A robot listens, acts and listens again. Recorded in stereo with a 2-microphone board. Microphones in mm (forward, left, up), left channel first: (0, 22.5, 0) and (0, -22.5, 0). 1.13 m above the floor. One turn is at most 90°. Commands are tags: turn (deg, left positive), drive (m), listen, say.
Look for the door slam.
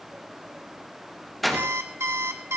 <turn deg="30"/>
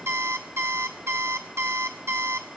<listen/>
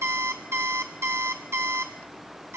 <say>I heard a door slam, but can't make it out now. It was about 30° right or 150° left.</say>